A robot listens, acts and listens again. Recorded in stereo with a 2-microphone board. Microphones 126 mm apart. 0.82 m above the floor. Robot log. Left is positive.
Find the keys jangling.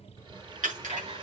cmd yaw -90
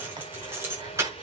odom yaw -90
note: So it is at 20° right.
cmd yaw -20
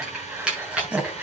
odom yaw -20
note: The keys jangling is now 10° right.
cmd yaw -10
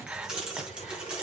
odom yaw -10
note: The keys jangling is now 10° right.
cmd yaw -10
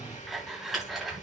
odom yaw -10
end: Found it: keys jangling, straight ahead.